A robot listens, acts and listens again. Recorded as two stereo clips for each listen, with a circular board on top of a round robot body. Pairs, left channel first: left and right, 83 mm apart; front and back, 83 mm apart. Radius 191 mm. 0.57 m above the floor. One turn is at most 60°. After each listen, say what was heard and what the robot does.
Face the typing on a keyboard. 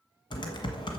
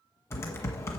The typing on a keyboard: 60° left. Turn 60° left.
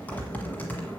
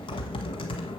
The typing on a keyboard is now 20° left. Turn 20° left.
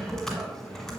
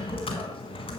Facing the typing on a keyboard.